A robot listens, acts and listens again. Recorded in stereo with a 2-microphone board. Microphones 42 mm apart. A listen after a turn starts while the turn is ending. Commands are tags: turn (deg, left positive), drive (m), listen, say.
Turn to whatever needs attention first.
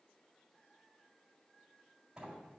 <listen/>
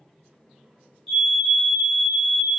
<turn deg="30"/>
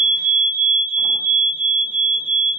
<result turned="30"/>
<turn deg="-15"/>
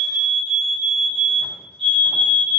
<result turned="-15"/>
<say>Facing the fire alarm.</say>